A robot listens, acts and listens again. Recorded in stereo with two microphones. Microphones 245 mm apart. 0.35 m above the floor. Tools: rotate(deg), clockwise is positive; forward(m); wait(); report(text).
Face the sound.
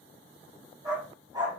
rotate(15)
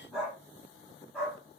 report("Found it: a dog barking, straight ahead.")